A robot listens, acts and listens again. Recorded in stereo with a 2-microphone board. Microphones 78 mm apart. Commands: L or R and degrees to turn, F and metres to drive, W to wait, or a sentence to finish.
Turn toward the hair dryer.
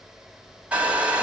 R15
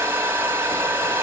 R150
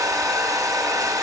R60
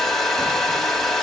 Facing the hair dryer.